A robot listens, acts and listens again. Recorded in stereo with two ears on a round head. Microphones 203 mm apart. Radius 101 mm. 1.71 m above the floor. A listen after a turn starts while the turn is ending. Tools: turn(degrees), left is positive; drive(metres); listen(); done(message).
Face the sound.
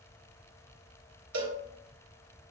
turn(degrees=-70)
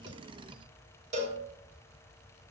turn(degrees=-35)
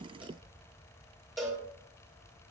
done("Found it: a cowbell, straight ahead.")